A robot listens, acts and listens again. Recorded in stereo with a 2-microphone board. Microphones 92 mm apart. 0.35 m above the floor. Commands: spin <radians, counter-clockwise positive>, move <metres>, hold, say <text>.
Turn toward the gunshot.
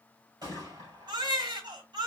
spin -0.79
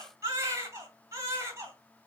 hold
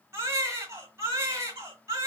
say I heard a gunshot, but can't make it out now. It was about straight ahead or 90° right.